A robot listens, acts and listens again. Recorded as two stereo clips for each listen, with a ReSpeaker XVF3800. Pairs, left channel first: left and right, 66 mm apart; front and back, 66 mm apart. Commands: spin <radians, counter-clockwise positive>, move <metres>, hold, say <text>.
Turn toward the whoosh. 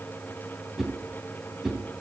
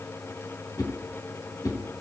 say Facing the whoosh, 2 to 4 m away.